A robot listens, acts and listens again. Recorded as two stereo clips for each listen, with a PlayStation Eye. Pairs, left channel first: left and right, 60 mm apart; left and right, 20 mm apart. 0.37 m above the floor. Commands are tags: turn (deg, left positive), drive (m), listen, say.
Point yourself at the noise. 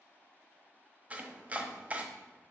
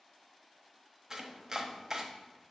<turn deg="-25"/>
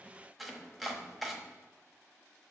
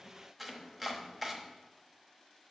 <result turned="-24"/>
<say>Found it: chopping, straight ahead, 1 to 2 m away.</say>